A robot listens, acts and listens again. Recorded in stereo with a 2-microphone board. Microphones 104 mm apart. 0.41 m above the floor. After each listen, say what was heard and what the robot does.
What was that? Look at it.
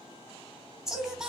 Turn 30° right.
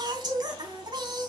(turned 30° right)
So it is at 135° right. Turn 135° right.
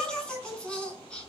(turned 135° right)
The singing is now 10° left. Turn 10° left.
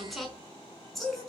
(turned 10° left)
Found it: singing, straight ahead, over 4 m away.